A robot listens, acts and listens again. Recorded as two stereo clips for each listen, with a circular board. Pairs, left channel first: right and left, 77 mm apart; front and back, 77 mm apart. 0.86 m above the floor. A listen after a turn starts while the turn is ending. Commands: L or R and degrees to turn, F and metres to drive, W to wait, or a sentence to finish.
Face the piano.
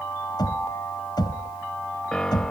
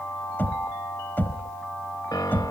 R15
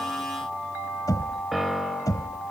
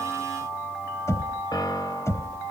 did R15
Found it: a piano, straight ahead.